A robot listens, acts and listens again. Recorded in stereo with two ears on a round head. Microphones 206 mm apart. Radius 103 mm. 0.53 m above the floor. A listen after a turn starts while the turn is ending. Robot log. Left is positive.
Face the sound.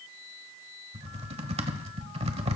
note: The typing on a keyboard: about 25° right or 155° right.
cmd yaw -25
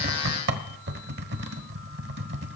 note: So it is at 130° right.
cmd yaw -130
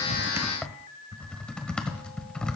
end: Facing the typing on a keyboard, 1 to 2 m away.